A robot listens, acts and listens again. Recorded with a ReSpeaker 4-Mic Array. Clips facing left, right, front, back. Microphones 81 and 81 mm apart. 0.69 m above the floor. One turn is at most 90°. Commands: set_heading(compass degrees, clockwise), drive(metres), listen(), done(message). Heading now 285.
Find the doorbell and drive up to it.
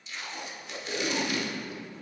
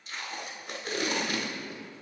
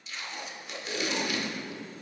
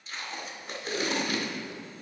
listen()
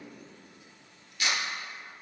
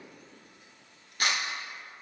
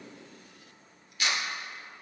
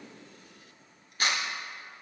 listen()
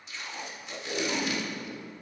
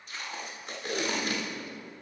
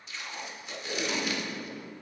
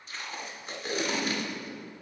done("I can't make out a doorbell, only tape being pulled.")